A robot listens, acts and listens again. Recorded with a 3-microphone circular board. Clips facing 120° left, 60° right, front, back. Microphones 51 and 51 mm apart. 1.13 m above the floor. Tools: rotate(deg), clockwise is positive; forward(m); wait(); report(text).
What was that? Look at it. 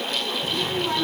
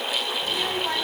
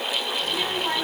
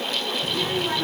rotate(65)
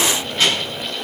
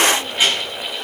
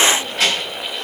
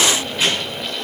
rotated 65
rotate(-15)
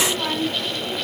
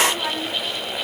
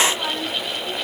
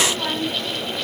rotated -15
rotate(-10)
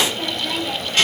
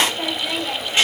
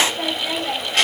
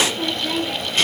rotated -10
rotate(-10)
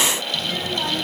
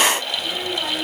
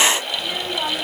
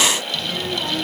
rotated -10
rotate(-10)
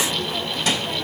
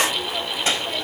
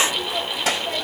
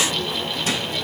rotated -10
report("Found it: a child speaking, straight ahead, over 4 m away.")